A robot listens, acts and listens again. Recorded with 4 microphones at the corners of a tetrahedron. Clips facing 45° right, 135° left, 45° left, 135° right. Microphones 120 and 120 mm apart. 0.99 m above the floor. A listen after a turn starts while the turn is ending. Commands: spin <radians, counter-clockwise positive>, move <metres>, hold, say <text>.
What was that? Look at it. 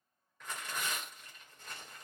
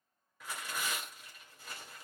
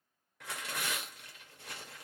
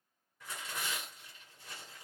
spin 0.87
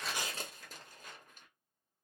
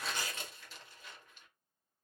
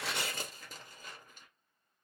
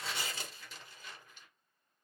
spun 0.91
say Facing the tearing paper.